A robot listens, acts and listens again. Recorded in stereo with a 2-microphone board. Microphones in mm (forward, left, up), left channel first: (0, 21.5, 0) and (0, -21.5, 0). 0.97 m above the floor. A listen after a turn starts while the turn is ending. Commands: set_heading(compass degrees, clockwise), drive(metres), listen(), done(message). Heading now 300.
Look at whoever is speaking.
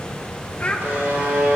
set_heading(270)
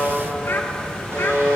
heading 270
listen()
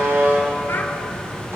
listen()
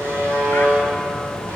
done("I heard a child speaking, but can't make it out now. It was about straight ahead or 120° left.")